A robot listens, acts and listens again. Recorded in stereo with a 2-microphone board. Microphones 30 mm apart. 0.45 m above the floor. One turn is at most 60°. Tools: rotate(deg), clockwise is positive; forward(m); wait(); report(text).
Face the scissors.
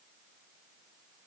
wait()
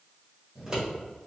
rotate(25)
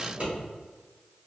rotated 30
rotate(60)
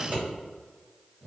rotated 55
rotate(60)
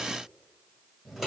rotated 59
report("Facing the scissors, 1 to 2 m away.")